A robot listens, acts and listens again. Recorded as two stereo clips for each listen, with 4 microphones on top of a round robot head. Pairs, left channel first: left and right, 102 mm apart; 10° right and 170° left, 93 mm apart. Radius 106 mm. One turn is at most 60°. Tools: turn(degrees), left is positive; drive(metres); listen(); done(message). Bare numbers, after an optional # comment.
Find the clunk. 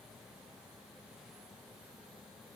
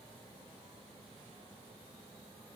listen()
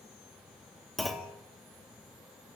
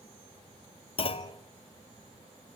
done("Facing the clunk.")